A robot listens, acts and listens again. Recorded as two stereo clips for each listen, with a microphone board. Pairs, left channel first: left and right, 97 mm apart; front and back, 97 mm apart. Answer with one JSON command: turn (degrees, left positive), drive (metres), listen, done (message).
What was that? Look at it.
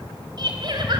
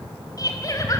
{"turn": -50}
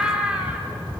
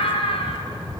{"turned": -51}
{"turn": -10}
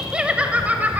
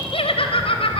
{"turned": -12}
{"turn": -15}
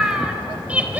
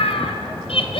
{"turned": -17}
{"turn": -15}
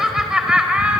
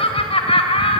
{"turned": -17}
{"turn": -10}
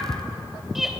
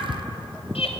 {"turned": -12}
{"done": "Facing the laughter."}